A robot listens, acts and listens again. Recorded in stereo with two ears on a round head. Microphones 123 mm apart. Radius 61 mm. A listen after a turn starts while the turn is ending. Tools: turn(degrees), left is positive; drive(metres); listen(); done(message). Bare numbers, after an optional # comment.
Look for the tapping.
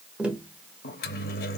turn(-30)
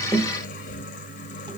listen()
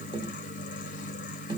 # So it is at 140° right.
turn(-140)
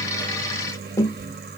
# The tapping is now 25° left.
turn(25)
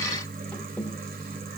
listen()
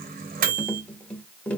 # The tapping is now 10° left.
turn(10)
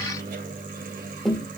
done("Facing the tapping.")